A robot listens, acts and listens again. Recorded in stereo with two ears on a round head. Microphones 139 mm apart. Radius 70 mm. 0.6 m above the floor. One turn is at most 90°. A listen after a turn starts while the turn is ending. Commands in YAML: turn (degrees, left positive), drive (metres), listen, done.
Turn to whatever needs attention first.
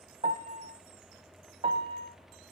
listen: true
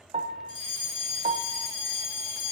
turn: 30
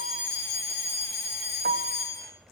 done: "Found it: a fire alarm, straight ahead, 2 to 4 m away."